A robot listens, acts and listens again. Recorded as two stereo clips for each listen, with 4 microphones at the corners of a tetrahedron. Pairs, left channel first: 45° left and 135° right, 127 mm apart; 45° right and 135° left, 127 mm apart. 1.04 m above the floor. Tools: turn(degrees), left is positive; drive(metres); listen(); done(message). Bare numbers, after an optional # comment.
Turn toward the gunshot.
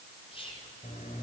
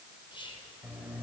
listen()
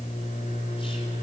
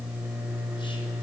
listen()
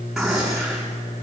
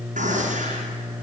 # The gunshot: 135° left.
turn(135)
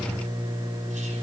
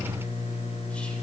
done("Facing where the gunshot came from. I can't hear it now.")